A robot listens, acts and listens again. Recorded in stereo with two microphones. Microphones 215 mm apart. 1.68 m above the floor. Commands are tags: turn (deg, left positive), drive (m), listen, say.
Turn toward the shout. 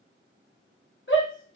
<turn deg="60"/>
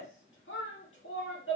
<turn deg="60"/>
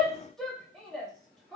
<say>Facing the shout, 1 to 2 m away.</say>